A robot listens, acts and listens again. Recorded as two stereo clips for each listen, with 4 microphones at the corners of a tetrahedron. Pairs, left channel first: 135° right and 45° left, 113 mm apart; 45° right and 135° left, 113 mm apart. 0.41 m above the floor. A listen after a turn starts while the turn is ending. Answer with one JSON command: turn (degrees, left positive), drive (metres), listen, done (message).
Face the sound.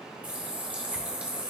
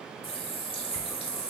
{"turn": -30}
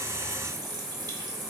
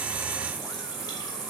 {"done": "Found it: a running tap, straight ahead."}